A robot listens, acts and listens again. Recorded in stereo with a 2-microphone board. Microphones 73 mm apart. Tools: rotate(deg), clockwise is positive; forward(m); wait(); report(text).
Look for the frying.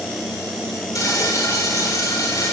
rotate(-50)
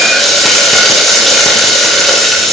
report("Facing the frying, over 4 m away.")